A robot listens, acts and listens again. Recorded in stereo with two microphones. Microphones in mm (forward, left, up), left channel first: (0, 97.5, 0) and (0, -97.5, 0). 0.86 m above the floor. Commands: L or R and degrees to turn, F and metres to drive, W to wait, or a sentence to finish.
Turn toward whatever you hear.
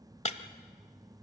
L35
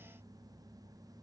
W
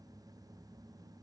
I heard breaking glass, but can't make it out now. It was about straight ahead or 110° left.